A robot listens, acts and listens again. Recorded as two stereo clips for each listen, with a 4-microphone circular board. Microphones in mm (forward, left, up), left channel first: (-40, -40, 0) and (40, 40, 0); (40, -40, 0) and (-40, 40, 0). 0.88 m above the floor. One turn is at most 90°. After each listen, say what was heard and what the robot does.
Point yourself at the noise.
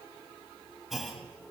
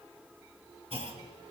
The clunk: 135° left. Turn 90° left.
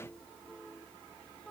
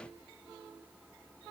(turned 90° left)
Nothing new. It was at 45° left. Turn 45° left.
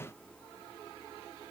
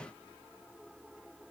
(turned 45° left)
I heard a clunk from this way, but can't make it out now.